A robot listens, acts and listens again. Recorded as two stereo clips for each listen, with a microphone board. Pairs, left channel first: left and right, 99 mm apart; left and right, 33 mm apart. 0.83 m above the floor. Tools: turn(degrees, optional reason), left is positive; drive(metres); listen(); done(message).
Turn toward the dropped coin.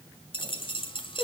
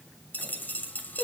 turn(degrees=60, reason="The dropped coin: about 60° left or 120° left.")
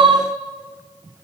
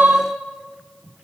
listen()
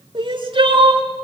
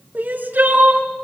done("I heard a dropped coin, but can't make it out now. It was about straight ahead or 60° left.")